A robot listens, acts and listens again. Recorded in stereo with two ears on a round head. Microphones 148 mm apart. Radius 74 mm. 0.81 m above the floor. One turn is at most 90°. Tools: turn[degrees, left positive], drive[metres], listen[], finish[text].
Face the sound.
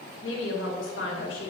Action: turn[90]
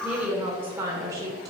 Thought: So it is at 20° right.
Action: turn[-20]
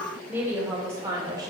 Thought: The woman speaking is now 20° right.
Action: turn[-20]
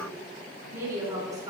Thought: The woman speaking is now 25° right.
Action: turn[-25]
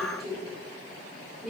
Action: finish[Found it: a woman speaking, straight ahead.]